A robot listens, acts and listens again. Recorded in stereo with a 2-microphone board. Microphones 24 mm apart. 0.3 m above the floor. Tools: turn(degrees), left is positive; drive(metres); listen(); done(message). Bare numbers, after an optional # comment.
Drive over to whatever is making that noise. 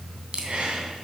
# The breathing: about 50° right or 130° right.
turn(-50)
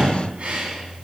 # So it is at 75° right.
turn(-75)
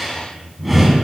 drive(1.0)
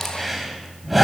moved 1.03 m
drive(1.0)
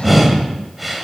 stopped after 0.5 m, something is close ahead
done("Arrived at the breathing, straight ahead.")